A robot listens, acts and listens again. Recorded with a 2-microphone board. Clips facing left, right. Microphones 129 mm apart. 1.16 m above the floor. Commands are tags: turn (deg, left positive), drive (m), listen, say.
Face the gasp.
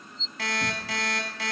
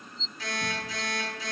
<listen/>
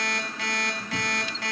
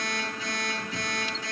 <listen/>
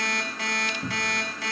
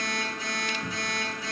<say>I can't make out a gasp, only a cupboard door and an alarm clock.</say>